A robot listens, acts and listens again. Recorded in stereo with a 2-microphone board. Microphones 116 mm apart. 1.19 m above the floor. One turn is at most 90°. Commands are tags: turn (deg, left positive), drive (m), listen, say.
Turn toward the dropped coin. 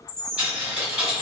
<turn deg="-30"/>
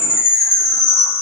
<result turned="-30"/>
<listen/>
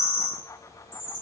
<say>I heard a dropped coin, but can't make it out now. It was about 20° left or 140° right.</say>